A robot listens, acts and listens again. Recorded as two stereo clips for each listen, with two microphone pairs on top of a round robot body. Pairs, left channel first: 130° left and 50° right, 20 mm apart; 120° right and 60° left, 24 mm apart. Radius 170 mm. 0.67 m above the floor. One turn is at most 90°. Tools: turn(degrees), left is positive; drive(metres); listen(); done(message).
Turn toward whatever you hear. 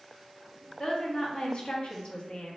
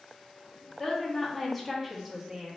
turn(degrees=90)
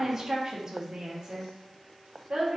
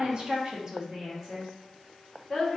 turn(degrees=-35)
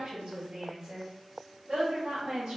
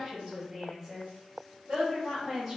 done("Found it: a woman speaking, straight ahead.")